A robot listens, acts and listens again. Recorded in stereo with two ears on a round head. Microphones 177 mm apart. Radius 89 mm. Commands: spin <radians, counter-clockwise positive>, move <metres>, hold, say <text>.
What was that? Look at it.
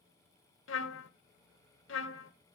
spin 1.31
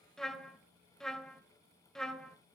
say Facing the trumpet, under 1 m away.